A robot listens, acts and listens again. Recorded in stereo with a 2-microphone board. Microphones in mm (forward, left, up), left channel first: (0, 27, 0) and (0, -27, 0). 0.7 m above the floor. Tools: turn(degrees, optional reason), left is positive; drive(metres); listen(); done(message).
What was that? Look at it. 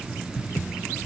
listen()
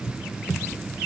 listen()
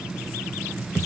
done("I can't make out anything to turn to.")